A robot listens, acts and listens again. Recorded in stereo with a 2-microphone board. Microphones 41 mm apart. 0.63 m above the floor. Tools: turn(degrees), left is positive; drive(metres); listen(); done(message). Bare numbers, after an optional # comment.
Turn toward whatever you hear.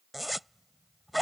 turn(-30)
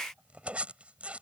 # So it is at 145° right.
turn(-145)
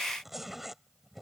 done("Found it: a zipper, straight ahead.")